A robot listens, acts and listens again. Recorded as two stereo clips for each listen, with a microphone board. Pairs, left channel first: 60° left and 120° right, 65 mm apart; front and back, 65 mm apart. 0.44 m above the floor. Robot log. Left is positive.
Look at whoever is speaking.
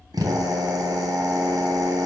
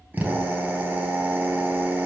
cmd idle
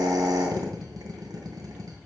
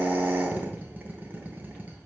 cmd idle
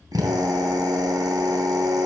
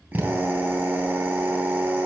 end: I can't make out anyone speaking, only a drill.